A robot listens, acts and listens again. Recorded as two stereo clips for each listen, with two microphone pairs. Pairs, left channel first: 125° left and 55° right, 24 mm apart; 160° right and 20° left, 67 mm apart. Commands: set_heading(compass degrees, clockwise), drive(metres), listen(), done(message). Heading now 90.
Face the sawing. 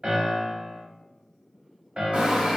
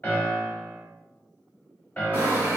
set_heading(125)
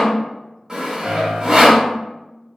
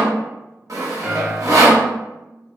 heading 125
done("Facing the sawing.")